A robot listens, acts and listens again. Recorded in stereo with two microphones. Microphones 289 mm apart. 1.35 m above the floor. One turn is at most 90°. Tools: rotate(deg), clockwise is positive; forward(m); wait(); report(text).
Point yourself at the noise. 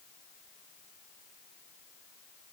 wait()
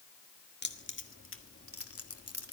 rotate(-60)
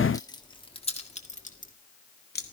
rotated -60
rotate(-35)
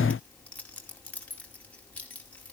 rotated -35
report("Found it: keys jangling, straight ahead.")